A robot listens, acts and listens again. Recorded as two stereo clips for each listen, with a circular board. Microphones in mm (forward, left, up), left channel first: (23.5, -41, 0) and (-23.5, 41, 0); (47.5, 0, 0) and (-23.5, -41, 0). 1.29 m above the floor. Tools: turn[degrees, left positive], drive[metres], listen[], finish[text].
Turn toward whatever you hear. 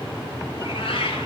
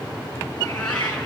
Thought: The cat meowing: 55° right.
Action: turn[-55]
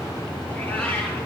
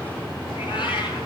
Thought: The cat meowing is now 15° left.
Action: turn[15]
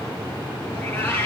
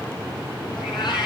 Action: finish[Found it: a cat meowing, straight ahead, over 4 m away.]